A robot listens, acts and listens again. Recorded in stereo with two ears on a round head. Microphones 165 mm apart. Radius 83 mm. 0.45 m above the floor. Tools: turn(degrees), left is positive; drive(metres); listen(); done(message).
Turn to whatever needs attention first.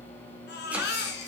turn(degrees=60)
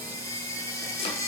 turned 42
turn(degrees=15)
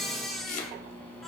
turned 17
done("Found it: a baby crying, straight ahead.")